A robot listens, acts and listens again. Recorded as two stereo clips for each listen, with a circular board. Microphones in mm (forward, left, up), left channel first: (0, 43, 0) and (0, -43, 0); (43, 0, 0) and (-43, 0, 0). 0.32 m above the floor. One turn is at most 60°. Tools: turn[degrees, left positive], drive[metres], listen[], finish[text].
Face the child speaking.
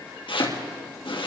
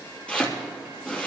Action: listen[]
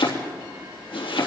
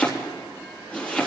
Action: listen[]
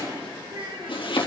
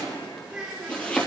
Thought: The child speaking: 100° right.
Action: turn[-60]
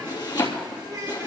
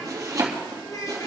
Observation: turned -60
Thought: The child speaking is now 40° right.
Action: turn[-40]
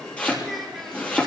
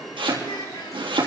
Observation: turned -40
Action: finish[Found it: a child speaking, straight ahead.]